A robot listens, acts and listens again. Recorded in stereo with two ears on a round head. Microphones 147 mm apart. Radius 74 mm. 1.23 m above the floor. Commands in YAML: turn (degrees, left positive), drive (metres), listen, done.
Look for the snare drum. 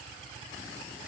listen: true
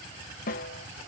turn: 55
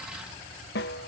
turn: 65
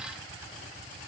listen: true
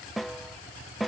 done: "Found it: a snare drum, straight ahead."